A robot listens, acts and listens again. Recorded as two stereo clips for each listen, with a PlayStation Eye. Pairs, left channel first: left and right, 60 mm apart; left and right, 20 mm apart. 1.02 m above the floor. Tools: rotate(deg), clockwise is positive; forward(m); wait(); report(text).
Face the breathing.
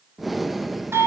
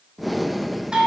rotate(-30)
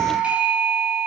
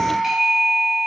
wait()
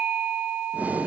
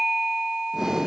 rotate(30)
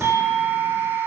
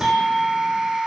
wait()
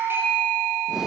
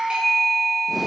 wait()
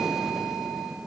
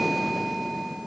rotate(10)
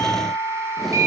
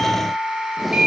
wait()
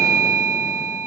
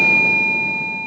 wait()
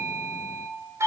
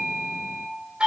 report("Facing where the breathing came from. I can't hear it now.")